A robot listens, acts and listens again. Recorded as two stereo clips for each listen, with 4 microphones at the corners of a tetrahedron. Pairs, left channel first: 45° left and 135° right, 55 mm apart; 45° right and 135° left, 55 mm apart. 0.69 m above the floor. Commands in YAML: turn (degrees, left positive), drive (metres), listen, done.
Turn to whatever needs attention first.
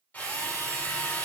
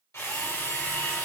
listen: true
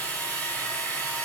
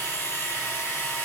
listen: true
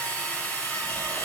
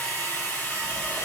done: "I can't make out anything urgent, only a drill."